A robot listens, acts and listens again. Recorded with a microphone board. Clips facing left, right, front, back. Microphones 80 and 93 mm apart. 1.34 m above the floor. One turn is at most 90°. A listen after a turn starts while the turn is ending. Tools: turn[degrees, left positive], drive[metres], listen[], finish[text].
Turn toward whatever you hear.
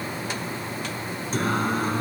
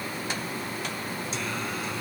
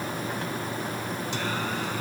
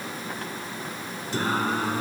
Thought: The singing: 135° left.
Action: turn[90]
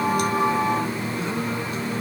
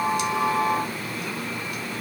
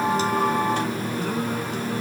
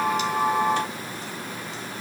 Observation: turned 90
Thought: The singing is now 30° left.
Action: turn[30]
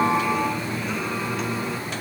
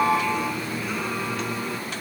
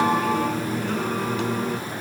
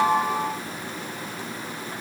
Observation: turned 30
Action: finish[Found it: singing, straight ahead.]